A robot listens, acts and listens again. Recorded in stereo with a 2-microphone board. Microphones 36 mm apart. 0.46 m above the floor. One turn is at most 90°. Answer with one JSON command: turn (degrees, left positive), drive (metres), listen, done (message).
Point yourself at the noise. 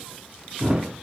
{"turn": -25}
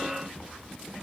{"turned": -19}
{"listen": true}
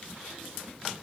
{"done": "I heard a thud, but can't make it out now. It was about 5° right or 135° right."}